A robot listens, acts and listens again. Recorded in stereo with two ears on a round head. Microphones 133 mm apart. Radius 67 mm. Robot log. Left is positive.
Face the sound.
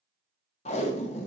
note: The tape being pulled: about 45° left or 135° left.
cmd yaw +45
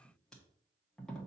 end: Found it: tape being pulled, straight ahead, 1 to 2 m away.